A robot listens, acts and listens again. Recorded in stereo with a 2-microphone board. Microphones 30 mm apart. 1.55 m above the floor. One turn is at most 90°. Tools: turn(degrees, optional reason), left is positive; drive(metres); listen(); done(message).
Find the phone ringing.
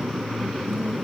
listen()
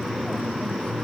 listen()
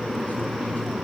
done("I can't make out a phone ringing.")